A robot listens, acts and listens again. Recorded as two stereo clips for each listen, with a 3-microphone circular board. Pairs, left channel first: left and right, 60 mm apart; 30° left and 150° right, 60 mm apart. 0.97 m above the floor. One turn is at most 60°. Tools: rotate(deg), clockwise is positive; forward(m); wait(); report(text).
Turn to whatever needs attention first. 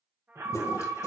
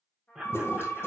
rotate(60)
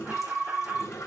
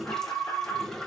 rotate(30)
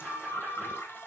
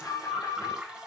report("Facing the alarm.")